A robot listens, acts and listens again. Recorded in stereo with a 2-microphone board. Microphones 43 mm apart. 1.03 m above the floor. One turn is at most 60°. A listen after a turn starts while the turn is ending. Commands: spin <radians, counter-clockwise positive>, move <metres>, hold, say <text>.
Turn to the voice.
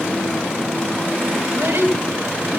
spin -1.05
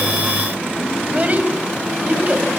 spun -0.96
spin -0.61
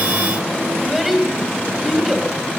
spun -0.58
say Facing the child speaking.